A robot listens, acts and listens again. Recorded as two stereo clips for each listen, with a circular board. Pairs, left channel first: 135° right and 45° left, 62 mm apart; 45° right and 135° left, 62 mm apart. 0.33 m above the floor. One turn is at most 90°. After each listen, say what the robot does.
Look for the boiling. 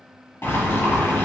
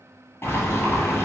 Turn 90° right.
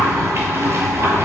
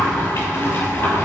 Found it: boiling, straight ahead.